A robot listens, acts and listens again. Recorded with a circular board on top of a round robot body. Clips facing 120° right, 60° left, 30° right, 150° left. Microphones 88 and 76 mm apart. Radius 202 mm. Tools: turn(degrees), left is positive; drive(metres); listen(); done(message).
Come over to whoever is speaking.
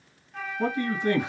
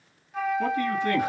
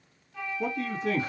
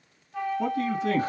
turn(degrees=175)
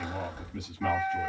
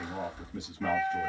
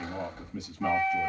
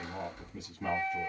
drive(metres=1.0)
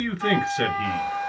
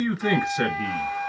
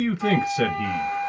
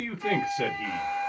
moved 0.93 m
turn(degrees=-10)
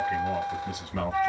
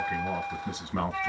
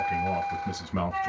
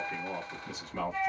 drive(metres=1.0)
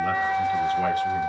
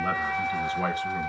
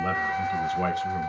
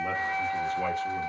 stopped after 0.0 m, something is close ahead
listen()
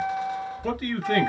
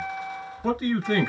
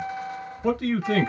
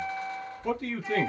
done("I am next to the man speaking.")